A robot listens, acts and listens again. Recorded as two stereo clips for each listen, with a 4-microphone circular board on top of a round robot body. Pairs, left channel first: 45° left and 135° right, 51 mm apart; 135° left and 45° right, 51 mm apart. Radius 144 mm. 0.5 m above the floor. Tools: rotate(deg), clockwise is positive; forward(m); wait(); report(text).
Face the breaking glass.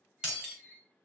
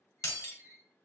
rotate(-150)
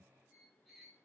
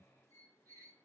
report("I heard breaking glass from this way, but can't make it out now.")